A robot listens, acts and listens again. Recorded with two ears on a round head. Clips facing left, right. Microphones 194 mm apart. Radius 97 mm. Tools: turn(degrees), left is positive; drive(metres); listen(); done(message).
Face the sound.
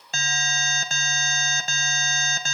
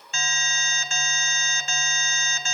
turn(degrees=35)
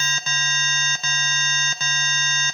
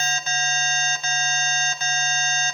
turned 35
turn(degrees=105)
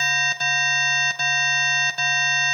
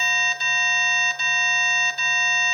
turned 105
turn(degrees=45)
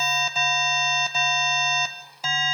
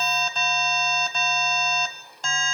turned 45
done("Found it: an alarm, straight ahead.")